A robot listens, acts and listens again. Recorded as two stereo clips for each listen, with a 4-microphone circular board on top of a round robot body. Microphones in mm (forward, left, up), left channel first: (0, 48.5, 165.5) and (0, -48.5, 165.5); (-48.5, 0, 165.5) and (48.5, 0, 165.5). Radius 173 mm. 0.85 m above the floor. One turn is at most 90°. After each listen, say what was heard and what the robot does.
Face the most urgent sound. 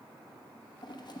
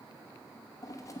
Keep listening.
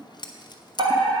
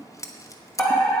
The fire alarm: 100° right. Turn 90° right.
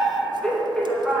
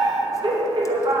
The fire alarm is now 10° left. Turn 10° left.
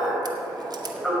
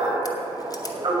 Found it: a fire alarm, straight ahead, 2 to 4 m away.